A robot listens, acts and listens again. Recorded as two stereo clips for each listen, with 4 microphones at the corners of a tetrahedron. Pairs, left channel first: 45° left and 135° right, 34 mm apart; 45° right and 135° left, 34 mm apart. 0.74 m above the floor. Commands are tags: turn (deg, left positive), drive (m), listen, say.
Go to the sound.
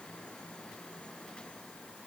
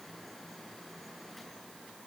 <listen/>
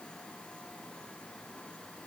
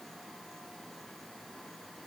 <listen/>
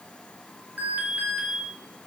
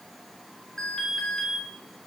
<turn deg="-115"/>
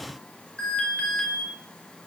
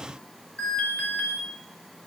<turn deg="-10"/>
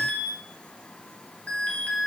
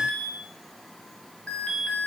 <drive m="1.0"/>
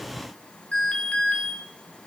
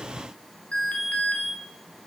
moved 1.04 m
<drive m="1.0"/>
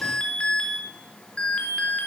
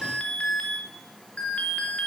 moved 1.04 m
<drive m="1.0"/>
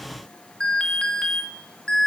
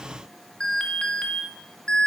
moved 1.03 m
<drive m="1.0"/>
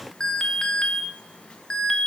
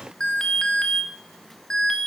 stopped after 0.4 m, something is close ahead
<say>Arrived at the alarm, straight ahead.</say>